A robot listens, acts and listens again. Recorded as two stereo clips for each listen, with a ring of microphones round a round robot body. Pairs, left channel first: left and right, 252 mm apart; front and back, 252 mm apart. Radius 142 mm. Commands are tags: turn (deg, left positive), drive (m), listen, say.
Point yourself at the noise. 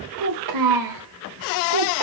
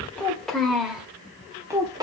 <turn deg="-105"/>
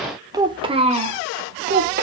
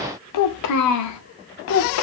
<turn deg="-35"/>
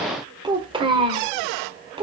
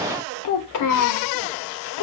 <turn deg="-15"/>
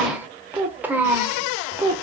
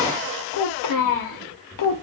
<say>Found it: a child speaking, straight ahead, 1 to 2 m away.</say>